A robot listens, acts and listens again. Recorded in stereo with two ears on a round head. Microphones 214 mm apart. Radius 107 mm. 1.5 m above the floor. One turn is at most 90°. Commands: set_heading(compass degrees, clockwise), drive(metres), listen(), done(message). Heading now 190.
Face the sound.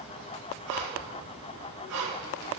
set_heading(260)
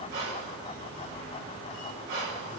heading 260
set_heading(300)
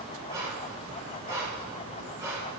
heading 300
set_heading(315)
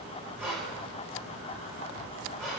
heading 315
done("Found it: breathing, straight ahead, over 4 m away.")